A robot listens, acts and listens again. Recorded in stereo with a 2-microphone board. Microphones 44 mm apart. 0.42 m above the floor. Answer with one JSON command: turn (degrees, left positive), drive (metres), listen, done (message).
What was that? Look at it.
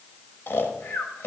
{"turn": 65}
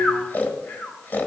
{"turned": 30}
{"turn": 50}
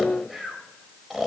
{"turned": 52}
{"done": "Found it: snoring, straight ahead, 1 to 2 m away."}